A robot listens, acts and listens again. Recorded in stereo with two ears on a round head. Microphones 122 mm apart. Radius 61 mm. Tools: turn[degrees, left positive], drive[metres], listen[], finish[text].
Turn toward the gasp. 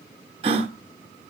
Thought: The gasp: about 45° right or 135° right.
Action: turn[-45]
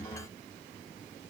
Action: listen[]
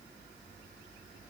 Action: finish[I heard a gasp, but can't make it out now. It was about straight ahead or 90° right.]